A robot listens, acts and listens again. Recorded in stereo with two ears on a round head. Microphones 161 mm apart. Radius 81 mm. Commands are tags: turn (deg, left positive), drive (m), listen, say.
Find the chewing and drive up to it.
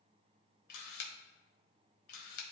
<listen/>
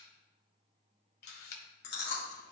<turn deg="65"/>
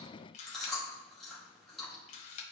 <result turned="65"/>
<drive m="1.0"/>
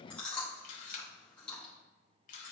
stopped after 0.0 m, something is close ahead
<say>Something is in my way. I am facing the chewing but have not reached it.</say>